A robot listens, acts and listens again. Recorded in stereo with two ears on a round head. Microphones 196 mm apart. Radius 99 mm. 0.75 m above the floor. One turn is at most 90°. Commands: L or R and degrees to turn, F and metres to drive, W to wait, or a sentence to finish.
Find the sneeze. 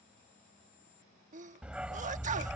R35
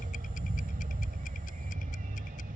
W
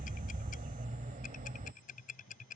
I heard a sneeze, but can't make it out now. It was about straight ahead or 110° right.